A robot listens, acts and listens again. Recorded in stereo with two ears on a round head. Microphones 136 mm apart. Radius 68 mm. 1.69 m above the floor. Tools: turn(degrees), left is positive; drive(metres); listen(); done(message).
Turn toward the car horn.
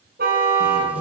turn(degrees=-70)
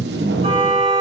turn(degrees=-40)
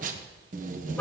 listen()
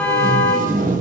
turn(degrees=10)
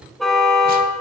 done("Found it: a car horn, straight ahead, over 4 m away.")